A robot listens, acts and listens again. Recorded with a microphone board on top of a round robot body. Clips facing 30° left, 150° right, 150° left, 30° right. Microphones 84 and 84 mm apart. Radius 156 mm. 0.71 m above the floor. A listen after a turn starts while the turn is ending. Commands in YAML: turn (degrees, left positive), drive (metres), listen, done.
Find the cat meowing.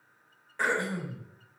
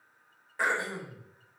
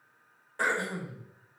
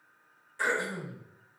listen: true
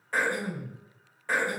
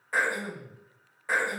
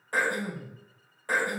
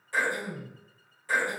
listen: true
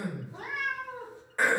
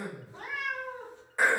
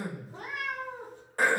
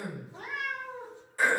turn: 110
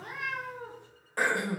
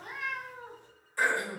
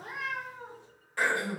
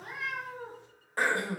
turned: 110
turn: 20
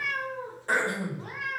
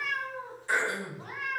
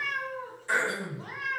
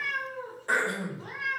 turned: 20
turn: 20
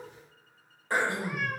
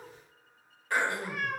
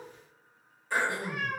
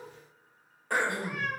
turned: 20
done: "Facing the cat meowing, 1 to 2 m away."